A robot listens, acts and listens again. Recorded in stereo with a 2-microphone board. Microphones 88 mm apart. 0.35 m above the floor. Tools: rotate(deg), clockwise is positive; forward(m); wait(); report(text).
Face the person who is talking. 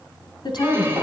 rotate(-60)
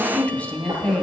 rotate(-20)
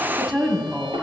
report("Found it: a woman speaking, straight ahead, 2 to 4 m away.")